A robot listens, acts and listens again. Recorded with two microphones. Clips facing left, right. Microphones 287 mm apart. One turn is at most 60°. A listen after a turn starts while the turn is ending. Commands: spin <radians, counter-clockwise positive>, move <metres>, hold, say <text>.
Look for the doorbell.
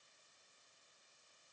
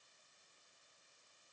hold
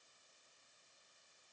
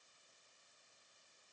hold
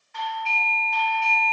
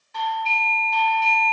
spin -0.79
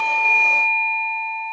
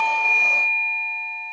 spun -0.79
say Found it: a doorbell, straight ahead.